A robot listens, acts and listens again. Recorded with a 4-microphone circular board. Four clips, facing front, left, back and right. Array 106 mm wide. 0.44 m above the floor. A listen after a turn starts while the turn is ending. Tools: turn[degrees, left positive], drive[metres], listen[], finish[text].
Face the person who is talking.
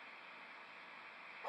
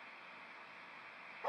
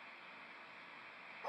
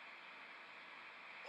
Action: listen[]
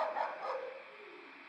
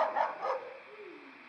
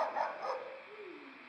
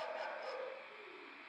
Thought: The child speaking: 140° left.
Action: turn[140]
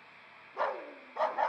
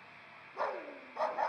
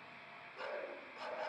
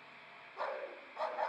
Action: listen[]
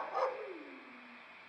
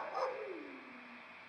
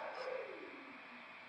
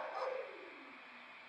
Thought: The child speaking is now 45° left.
Action: turn[45]
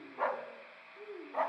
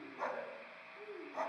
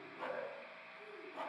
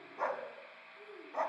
Action: finish[Facing the child speaking, over 4 m away.]